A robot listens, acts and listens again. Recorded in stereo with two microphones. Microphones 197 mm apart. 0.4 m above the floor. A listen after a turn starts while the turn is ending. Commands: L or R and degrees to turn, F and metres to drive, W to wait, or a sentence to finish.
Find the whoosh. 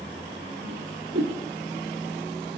R90
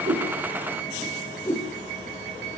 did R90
L15
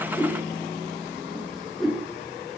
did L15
Facing the whoosh, 2 to 4 m away.